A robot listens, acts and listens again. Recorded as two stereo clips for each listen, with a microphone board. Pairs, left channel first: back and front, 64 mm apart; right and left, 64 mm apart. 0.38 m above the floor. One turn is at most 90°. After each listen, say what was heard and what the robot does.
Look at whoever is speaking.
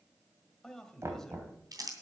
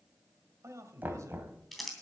The man speaking: 100° left. Turn 90° left.
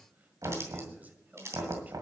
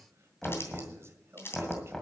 The man speaking is now 60° left. Turn 60° left.
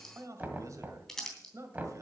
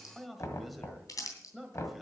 Facing the man speaking.